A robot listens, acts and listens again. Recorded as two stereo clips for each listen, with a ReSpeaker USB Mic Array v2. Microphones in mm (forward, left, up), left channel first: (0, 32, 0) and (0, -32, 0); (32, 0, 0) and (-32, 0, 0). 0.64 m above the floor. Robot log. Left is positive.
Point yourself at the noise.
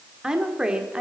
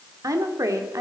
note: The woman speaking: 165° right.
cmd yaw -165
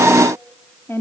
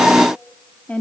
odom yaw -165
note: The woman speaking is now 65° left.
cmd yaw +65
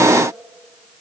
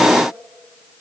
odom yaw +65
cmd idle
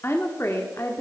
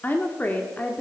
note: The woman speaking is now 65° left.
cmd yaw +65
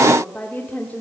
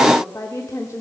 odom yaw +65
note: The woman speaking is now 30° left.
cmd yaw +30
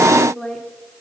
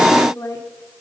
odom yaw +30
end: Facing the woman speaking.